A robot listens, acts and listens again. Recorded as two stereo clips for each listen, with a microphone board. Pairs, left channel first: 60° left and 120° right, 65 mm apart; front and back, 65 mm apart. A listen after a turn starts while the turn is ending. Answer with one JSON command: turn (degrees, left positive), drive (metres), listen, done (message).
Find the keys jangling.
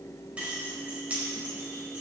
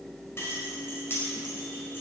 {"turn": -50}
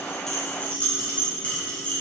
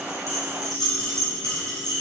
{"turn": -10}
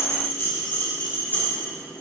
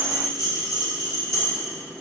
{"done": "Facing the keys jangling."}